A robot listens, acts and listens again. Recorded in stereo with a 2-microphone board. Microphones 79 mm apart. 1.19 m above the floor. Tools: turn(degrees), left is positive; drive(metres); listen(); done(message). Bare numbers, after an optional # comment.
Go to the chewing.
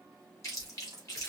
# The chewing: about 40° left or 140° left.
turn(40)
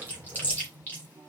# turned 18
# So it is at 25° left.
turn(25)
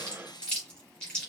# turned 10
# The chewing is now 10° left.
turn(10)
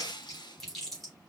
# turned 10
drive(1.0)
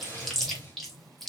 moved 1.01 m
drive(1.0)
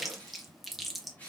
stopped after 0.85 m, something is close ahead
done("Arrived at the chewing, straight ahead.")